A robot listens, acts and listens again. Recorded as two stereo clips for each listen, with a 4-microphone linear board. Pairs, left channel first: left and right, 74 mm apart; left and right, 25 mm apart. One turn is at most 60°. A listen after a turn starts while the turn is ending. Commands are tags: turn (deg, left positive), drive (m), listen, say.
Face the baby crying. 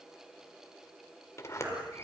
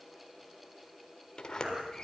<turn deg="-30"/>
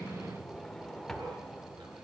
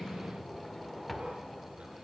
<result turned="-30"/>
<listen/>
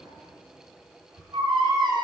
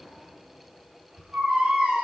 <turn deg="-60"/>
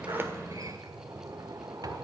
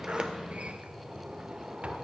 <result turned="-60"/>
<turn deg="-55"/>
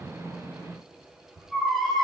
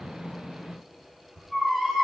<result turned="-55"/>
<say>Found it: a baby crying, straight ahead.</say>